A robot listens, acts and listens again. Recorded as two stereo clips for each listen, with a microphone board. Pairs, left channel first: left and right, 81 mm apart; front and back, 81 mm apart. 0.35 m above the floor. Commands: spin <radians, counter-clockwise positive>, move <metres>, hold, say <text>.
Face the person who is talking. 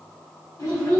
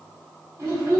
spin 2.27
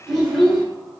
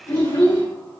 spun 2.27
say Facing the child speaking.